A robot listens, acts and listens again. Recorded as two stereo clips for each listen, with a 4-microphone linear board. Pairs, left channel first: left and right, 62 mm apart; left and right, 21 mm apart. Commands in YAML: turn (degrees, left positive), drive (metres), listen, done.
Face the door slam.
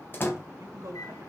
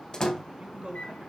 turn: 35
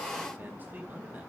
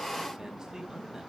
listen: true
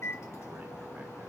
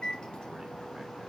done: "I heard a door slam, but can't make it out now. It was about straight ahead or 110° left."